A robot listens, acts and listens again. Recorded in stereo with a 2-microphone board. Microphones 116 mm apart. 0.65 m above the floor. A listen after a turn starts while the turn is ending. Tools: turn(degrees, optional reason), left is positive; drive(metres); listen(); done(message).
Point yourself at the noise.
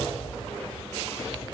listen()
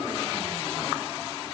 listen()
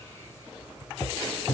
done("I can't make out anything to turn to.")